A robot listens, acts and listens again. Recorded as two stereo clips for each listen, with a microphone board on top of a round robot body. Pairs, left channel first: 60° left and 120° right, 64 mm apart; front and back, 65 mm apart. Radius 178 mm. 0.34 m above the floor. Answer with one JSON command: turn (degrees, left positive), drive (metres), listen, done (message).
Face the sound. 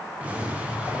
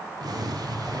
{"turn": 170}
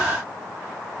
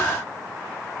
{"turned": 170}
{"done": "Facing where the explosion came from. I can't hear it now."}